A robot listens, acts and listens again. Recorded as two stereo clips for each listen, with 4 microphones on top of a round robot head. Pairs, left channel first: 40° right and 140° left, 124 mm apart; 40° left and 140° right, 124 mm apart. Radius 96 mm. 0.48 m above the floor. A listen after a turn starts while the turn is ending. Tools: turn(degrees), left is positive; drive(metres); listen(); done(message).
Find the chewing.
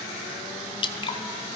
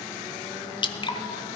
listen()
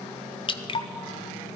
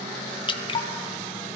listen()
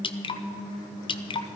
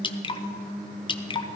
done("I can't make out chewing to turn to.")